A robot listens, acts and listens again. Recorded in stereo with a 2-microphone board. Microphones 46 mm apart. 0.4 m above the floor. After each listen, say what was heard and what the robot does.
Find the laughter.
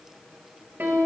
Keep listening.
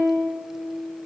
Keep listening.
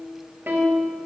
I can't make out laughter, only a piano.